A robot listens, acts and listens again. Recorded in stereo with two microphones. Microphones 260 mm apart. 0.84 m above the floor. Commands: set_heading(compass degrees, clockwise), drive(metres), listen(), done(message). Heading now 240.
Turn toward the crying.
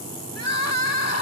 set_heading(150)
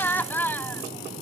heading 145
set_heading(135)
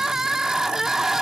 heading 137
done("Found it: crying, straight ahead.")